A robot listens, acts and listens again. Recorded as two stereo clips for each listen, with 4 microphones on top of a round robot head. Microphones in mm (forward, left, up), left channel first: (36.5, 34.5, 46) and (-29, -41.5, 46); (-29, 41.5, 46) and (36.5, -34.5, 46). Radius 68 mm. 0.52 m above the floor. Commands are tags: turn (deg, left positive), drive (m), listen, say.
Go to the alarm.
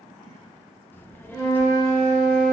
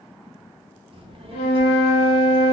<listen/>
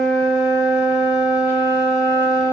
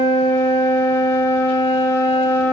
<listen/>
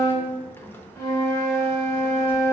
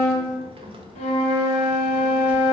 <say>I can't make out an alarm to turn to.</say>